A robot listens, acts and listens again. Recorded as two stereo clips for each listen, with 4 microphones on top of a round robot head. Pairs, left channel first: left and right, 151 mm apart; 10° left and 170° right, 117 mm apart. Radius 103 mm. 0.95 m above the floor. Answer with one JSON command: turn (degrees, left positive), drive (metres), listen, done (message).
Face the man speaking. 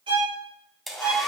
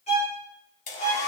{"listen": true}
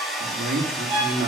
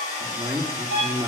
{"turn": -100}
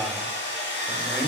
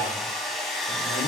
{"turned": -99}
{"listen": true}
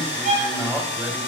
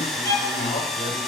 {"done": "Found it: a man speaking, straight ahead."}